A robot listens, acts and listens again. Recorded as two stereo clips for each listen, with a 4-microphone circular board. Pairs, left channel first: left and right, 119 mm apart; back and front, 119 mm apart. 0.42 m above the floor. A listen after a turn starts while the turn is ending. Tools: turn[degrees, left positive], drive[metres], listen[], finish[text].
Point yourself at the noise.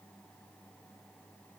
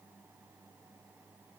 Action: listen[]
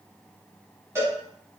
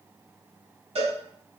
Thought: The cowbell: 25° right.
Action: turn[-25]
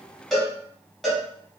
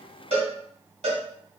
Action: finish[Found it: a cowbell, straight ahead.]